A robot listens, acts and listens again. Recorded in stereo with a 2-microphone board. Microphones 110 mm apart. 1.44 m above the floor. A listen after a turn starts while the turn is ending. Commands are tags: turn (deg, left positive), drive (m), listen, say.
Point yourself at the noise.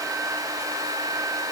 <listen/>
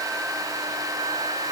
<listen/>
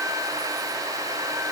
<say>I can't make out anything to turn to.</say>